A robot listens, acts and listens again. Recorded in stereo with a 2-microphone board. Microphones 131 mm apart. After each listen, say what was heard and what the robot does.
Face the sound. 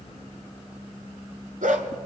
Turn 90° right.
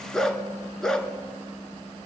Facing the dog barking.